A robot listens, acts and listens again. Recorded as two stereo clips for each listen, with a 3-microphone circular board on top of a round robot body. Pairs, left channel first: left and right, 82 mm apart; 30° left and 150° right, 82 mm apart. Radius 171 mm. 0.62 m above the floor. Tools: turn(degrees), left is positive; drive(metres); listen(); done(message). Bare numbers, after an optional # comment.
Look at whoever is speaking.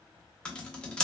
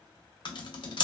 listen()
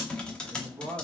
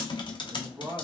# The man speaking: 100° right.
turn(-100)
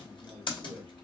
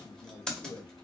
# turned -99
done("Facing the man speaking.")